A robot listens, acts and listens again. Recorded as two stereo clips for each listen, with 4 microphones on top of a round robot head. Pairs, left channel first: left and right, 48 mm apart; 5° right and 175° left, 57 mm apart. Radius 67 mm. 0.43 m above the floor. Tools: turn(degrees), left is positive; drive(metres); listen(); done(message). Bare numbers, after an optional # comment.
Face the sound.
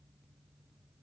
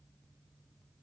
listen()
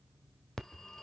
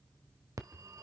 # The phone ringing: 175° left.
turn(175)
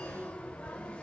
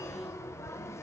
# The phone ringing is now 25° left.
turn(25)
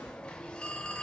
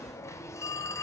# The phone ringing is now 20° left.
turn(20)
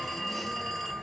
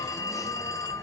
done("Found it: a phone ringing, straight ahead.")